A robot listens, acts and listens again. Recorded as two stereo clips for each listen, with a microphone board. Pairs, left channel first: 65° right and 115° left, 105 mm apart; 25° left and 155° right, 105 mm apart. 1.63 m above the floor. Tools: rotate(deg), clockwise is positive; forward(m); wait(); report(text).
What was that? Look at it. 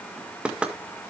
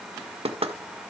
rotate(165)
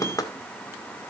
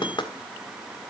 rotate(15)
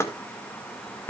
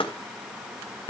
report("Found it: knocking, straight ahead, 1 to 2 m away.")